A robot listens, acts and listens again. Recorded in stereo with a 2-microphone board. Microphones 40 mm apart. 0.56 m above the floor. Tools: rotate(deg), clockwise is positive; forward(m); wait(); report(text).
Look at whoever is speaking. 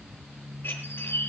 wait()
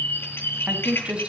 rotate(30)
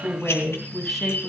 report("Facing the woman speaking, over 4 m away.")